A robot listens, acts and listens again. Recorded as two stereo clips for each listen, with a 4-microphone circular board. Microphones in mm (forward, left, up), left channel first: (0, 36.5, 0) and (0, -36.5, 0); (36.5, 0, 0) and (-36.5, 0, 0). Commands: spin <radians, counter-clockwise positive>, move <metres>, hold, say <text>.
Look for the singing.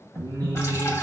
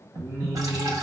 spin -1.75
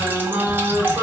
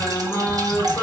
spin -0.87
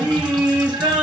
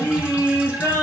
spin -0.35
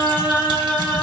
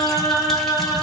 say Found it: singing, straight ahead, 2 to 4 m away.